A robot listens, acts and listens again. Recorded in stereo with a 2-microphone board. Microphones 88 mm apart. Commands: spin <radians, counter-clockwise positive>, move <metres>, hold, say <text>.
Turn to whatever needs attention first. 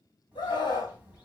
spin 1.22
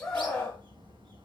spin 0.17
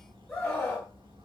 say Found it: a scream, straight ahead.